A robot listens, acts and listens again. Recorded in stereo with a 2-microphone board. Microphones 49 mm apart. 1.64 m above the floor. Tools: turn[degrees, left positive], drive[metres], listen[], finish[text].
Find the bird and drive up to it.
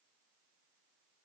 Action: listen[]
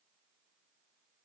Action: listen[]
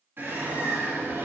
Thought: The bird: about 50° right or 130° right.
Action: turn[-50]
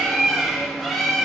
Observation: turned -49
Action: drive[1.0]
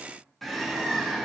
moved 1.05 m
Action: drive[1.0]
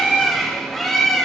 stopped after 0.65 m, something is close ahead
Action: finish[Arrived at the bird, straight ahead.]